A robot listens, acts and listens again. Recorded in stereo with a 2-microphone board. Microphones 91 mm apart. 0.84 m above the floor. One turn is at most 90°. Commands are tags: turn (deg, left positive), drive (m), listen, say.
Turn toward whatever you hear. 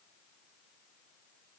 <listen/>
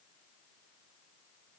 <listen/>
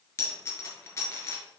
<turn deg="30"/>
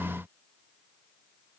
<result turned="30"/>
<listen/>
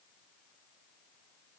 <say>I heard a dropped coin, but can't make it out now. It was about straight ahead or 120° left.</say>